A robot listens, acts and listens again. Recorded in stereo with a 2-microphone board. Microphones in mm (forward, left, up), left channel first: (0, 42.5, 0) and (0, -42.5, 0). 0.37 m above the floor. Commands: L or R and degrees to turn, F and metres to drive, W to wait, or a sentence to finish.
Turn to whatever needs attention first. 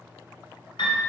W
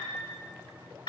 W
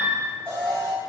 R25
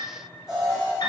Found it: an alarm, straight ahead, 1 to 2 m away.